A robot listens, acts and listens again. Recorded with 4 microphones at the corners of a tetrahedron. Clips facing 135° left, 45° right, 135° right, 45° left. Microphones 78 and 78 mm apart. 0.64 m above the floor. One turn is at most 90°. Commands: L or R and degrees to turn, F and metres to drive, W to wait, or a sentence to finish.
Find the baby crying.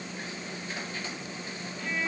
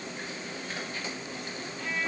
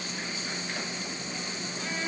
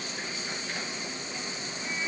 W
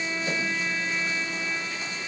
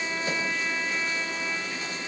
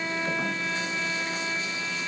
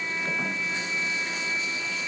W
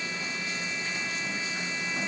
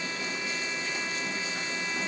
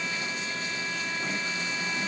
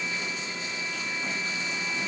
I can't make out a baby crying to turn to.